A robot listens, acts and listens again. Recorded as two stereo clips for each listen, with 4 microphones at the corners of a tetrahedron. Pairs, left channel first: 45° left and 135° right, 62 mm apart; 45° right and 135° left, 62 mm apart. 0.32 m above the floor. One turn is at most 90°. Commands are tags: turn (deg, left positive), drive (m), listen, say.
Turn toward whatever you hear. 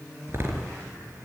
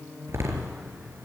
<turn deg="90"/>
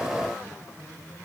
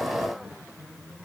<turn deg="85"/>
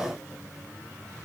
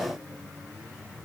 <say>I heard a door slam from this way, but can't make it out now.</say>